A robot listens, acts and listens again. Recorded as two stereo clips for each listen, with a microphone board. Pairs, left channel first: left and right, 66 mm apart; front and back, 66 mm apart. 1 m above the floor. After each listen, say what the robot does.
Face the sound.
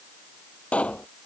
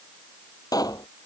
Turn 20° left.
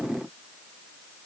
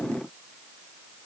I heard a pop from this way, but can't make it out now.